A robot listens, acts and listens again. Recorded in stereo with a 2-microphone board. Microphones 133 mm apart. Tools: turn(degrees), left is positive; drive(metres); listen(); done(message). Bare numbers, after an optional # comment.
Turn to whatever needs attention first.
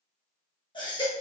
# The baby crying: about 35° left or 145° left.
turn(35)
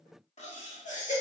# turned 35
# So it is at 110° left.
turn(110)
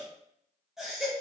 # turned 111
done("Facing the baby crying.")